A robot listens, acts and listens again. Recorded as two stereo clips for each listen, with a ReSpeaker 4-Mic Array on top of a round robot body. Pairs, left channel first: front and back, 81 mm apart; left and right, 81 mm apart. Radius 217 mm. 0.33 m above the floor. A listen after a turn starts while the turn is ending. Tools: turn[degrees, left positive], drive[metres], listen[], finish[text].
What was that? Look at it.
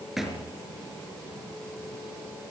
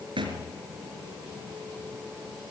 Thought: The thud: 95° right.
Action: turn[-95]
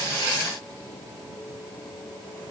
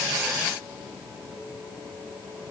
Action: finish[Facing where the thud came from. I can't hear it now.]